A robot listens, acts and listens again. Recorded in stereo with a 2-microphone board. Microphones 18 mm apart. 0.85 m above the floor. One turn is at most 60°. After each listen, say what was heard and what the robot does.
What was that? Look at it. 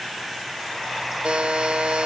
The buzzer: about 70° right or 110° right. Turn 60° right.
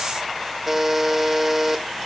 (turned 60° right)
So it is at 15° right. Turn 15° right.
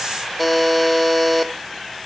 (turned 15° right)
Found it: a buzzer, straight ahead, 1 to 2 m away.